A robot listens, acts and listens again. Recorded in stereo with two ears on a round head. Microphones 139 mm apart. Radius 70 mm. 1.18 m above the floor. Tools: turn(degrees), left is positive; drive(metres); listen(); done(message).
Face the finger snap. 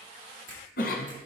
turn(degrees=-55)
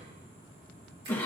listen()
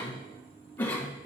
listen()
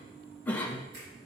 turn(degrees=-70)
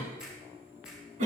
done("Found it: a finger snap, straight ahead, 2 to 4 m away.")